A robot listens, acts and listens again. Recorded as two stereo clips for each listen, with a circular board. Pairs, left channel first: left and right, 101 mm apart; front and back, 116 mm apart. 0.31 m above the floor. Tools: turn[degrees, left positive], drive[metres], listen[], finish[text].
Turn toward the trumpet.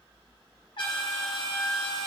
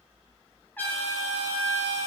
Thought: The trumpet: 70° left.
Action: turn[70]
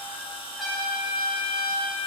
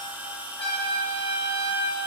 Action: finish[Found it: a trumpet, straight ahead, 2 to 4 m away.]